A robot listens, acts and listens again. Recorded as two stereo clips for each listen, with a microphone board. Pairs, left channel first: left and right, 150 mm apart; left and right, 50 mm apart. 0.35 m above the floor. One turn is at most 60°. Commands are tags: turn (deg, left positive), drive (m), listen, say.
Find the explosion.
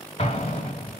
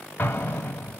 <turn deg="40"/>
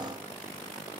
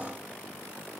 <listen/>
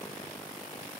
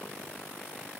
<say>I heard an explosion, but can't make it out now. It was about straight ahead or 100° left.</say>